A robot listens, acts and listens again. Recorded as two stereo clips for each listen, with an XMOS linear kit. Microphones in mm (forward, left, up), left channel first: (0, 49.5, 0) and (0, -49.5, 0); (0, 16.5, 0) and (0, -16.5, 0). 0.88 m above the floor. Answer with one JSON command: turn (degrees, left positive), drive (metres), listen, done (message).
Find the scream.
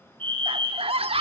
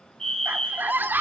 {"turn": -90}
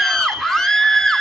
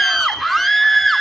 {"done": "Facing the scream."}